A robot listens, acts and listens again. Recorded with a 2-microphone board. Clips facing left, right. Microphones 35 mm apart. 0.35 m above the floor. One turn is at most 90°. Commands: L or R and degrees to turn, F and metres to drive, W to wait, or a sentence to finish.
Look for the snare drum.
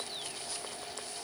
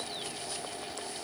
W
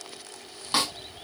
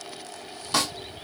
L20
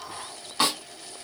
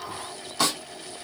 L90
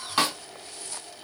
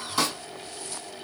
L50
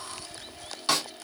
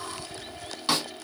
R15
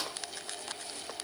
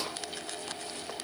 W
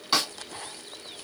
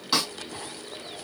Facing the snare drum, 2 to 4 m away.